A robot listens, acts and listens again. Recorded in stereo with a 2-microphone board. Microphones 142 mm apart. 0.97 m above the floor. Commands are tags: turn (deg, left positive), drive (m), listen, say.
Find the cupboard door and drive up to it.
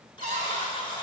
<turn deg="-70"/>
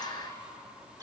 <listen/>
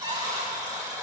<turn deg="-40"/>
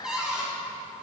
<drive m="1.0"/>
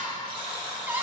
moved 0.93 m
<turn deg="-15"/>
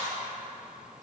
<listen/>
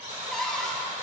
<drive m="1.0"/>
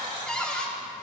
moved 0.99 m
<drive m="1.0"/>
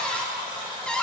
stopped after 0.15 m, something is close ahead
<turn deg="10"/>
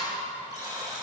<say>Arrived at the cupboard door, straight ahead.</say>